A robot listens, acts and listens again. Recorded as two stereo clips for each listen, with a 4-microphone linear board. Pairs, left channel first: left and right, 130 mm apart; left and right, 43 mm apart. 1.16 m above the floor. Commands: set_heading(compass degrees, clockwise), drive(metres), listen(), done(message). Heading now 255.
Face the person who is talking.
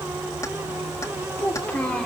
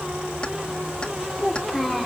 set_heading(225)
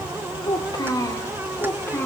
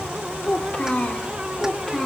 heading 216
set_heading(201)
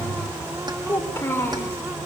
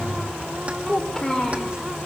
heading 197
set_heading(182)
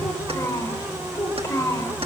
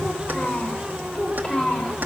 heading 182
set_heading(22)
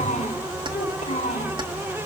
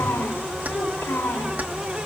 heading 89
set_heading(24)
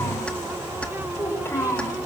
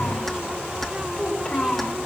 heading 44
set_heading(24)
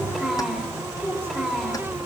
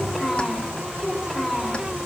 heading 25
done("Facing the child speaking.")